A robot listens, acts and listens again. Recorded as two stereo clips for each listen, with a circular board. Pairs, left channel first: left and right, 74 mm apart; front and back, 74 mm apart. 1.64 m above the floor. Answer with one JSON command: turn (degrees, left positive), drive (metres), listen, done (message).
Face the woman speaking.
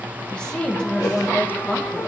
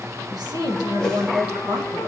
{"turn": 165}
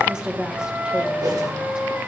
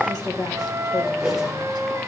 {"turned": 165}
{"turn": -15}
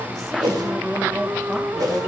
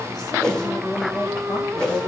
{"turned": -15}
{"done": "Found it: a woman speaking, straight ahead, 1 to 2 m away."}